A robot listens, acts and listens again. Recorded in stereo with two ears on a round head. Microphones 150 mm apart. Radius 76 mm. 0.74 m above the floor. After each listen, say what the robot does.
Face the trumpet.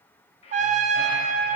Turn 45° right.
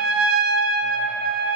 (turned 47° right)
Turn 80° right.
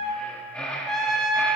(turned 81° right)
Found it: a trumpet, straight ahead, under 1 m away.